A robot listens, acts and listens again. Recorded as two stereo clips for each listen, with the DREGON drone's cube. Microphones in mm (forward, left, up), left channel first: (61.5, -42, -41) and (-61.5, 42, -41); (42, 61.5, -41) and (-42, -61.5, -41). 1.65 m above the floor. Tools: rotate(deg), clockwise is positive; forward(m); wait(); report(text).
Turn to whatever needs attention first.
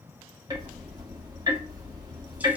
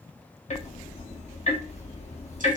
wait()
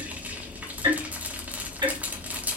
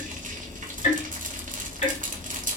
wait()
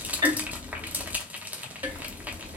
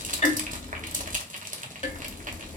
report("I can't make out anything urgent, only frying and ticking.")